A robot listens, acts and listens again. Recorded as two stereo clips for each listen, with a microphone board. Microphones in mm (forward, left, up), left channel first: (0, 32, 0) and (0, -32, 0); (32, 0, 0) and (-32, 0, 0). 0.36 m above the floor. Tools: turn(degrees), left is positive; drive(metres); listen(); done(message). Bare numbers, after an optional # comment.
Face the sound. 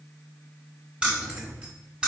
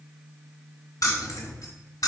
# The keys jangling: 20° right.
turn(-20)
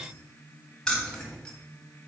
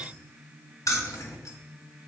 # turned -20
# The keys jangling is now 10° left.
turn(10)
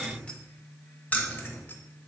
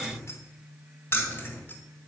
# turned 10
# The keys jangling is now 40° left.
turn(40)
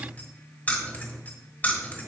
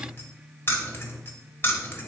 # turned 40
# The keys jangling is now 35° left.
turn(35)
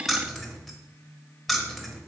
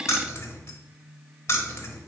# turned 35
done("Found it: keys jangling, straight ahead.")